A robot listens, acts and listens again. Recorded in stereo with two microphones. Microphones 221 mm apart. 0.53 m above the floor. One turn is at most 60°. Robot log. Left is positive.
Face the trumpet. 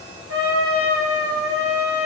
cmd yaw -60
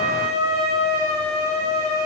note: So it is at 15° right.
cmd yaw -15
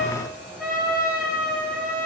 end: Facing the trumpet.